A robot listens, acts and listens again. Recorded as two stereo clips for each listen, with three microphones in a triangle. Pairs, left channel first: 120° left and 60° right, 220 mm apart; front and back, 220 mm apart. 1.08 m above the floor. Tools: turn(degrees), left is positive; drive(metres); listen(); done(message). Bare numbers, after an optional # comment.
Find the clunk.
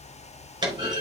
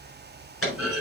# The clunk: 10° left.
turn(10)
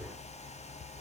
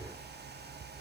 done("I heard a clunk from this way, but can't make it out now.")